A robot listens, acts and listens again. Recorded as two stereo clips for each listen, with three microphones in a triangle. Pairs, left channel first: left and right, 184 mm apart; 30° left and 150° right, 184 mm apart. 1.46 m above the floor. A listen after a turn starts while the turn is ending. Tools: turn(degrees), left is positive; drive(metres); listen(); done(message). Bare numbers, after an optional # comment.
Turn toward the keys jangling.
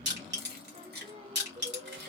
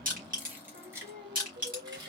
# The keys jangling: 85° right.
turn(-85)
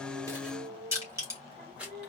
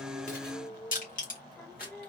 done("Found it: keys jangling, straight ahead.")